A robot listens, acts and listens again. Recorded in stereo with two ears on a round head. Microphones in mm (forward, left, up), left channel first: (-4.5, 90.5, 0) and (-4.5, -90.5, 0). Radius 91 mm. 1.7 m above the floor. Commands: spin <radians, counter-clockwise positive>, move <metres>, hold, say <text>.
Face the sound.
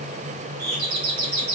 spin -0.96
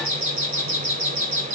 spin -1.22
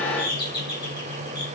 spin 0.35
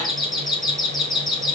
say Facing the doorbell, 2 to 4 m away.